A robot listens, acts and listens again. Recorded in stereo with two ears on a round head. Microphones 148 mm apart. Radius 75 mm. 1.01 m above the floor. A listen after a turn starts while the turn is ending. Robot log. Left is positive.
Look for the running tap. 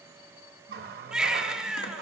note: The running tap: about 60° right or 120° right.
cmd yaw -60
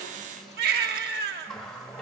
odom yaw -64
end: Facing the running tap.